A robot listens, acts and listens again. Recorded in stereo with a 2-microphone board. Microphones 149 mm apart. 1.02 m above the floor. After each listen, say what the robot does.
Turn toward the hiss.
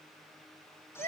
Keep listening.
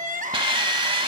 Turn 35° right.
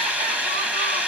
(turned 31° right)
Turn 10° right.
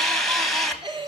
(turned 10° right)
Facing the hiss, 1 to 2 m away.